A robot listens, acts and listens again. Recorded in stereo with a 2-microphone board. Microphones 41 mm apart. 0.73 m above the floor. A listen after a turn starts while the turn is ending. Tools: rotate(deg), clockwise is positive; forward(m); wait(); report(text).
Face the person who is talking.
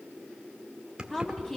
rotate(-30)
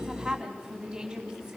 rotate(15)
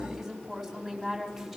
report("Facing the woman speaking, over 4 m away.")